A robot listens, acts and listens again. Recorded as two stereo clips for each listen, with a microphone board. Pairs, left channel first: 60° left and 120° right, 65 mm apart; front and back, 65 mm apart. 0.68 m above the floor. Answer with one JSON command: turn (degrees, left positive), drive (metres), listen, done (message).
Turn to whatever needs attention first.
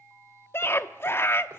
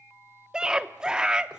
{"turn": 105}
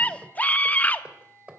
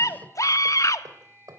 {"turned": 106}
{"done": "Found it: a scream, straight ahead, under 1 m away."}